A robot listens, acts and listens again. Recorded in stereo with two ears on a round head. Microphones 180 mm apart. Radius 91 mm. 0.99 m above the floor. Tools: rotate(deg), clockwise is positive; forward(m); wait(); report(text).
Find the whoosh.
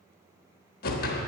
rotate(-50)
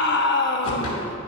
wait()
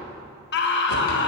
wait()
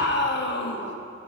report("I heard a whoosh, but can't make it out now. It was about straight ahead or 80° left.")